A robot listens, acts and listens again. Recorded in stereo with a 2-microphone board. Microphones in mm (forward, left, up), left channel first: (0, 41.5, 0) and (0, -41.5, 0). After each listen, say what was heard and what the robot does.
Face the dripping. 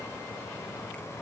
Keep listening.
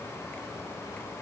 Keep listening.
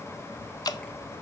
The dripping: about 55° left or 125° left. Turn 55° left.
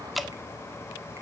Facing the dripping, under 1 m away.